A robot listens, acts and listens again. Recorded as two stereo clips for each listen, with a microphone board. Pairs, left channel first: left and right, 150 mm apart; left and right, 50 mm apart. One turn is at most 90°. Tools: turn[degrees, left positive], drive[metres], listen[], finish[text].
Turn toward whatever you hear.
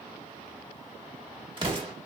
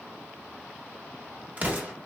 Thought: The explosion: about 35° right or 145° right.
Action: turn[-35]
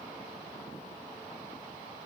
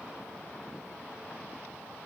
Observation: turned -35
Action: listen[]
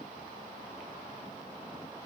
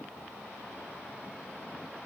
Action: finish[I heard an explosion, but can't make it out now. It was about straight ahead or 110° right.]